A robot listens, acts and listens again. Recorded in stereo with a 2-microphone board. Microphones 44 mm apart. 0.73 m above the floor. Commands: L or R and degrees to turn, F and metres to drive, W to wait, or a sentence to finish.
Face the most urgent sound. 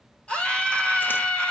L25
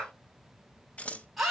Found it: a scream, straight ahead.